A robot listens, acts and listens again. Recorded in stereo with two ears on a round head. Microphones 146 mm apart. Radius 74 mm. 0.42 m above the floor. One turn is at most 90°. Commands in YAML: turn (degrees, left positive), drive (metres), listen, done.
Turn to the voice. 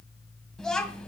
turn: 30
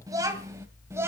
turn: -15
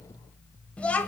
turn: 10
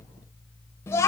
turn: 20
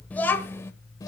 turn: 25
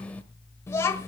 turn: 15
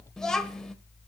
done: "Facing the child speaking."